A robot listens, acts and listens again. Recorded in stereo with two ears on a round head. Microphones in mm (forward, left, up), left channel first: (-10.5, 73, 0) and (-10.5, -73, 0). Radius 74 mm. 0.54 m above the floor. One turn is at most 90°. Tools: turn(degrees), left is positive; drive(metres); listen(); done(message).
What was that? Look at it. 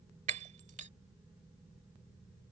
turn(degrees=-45)
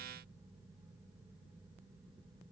listen()
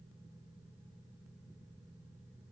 done("I heard breaking glass, but can't make it out now. It was about straight ahead or 90° right.")